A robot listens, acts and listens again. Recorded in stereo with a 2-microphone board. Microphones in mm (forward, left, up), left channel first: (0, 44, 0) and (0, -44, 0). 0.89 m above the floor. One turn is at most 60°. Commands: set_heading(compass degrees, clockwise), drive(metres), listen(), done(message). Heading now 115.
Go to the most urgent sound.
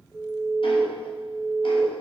set_heading(145)
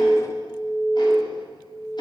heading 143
set_heading(203)
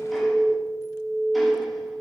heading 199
set_heading(259)
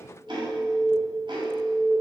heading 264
set_heading(284)
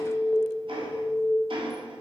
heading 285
drive(1.0)
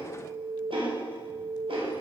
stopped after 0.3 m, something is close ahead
done("Blocked. The alarm is further on, straight ahead.")